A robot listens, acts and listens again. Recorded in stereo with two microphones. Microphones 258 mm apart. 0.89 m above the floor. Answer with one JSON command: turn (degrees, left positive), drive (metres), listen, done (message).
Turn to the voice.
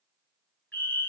{"listen": true}
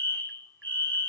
{"listen": true}
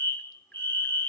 {"done": "I can't make out anyone speaking to turn to."}